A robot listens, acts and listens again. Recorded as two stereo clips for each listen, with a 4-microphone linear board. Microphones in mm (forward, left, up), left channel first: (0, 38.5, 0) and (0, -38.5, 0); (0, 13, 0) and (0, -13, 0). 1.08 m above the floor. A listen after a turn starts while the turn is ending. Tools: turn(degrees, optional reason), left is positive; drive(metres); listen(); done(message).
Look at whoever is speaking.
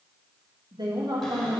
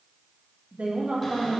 turn(degrees=-70, reason="The woman speaking: about 70° right or 110° right.")
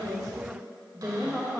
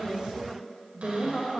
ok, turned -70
done("Found it: a woman speaking, straight ahead, 1 to 2 m away.")